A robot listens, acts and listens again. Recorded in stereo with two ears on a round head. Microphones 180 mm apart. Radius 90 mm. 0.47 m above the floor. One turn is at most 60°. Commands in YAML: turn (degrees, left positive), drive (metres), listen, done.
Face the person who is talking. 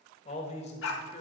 turn: 35
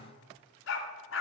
listen: true
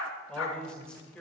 done: "Facing the man speaking."